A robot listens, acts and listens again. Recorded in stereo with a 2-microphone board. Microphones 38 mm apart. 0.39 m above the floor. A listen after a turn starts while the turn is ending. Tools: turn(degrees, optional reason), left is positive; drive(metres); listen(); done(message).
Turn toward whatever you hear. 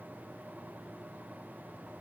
listen()
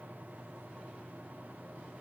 listen()
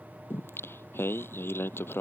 turn(degrees=90)
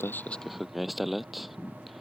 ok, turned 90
done("Found it: singing, straight ahead.")